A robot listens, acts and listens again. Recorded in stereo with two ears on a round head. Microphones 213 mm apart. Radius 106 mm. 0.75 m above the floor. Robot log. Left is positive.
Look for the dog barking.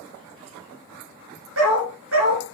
note: The dog barking: about 60° right or 120° right.
cmd yaw -60
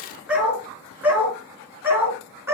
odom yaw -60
note: So it is at 10° right.
cmd yaw -10
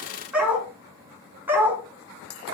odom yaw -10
note: The dog barking is now 10° right.
cmd yaw -10
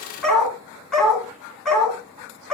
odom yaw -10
end: Found it: a dog barking, straight ahead.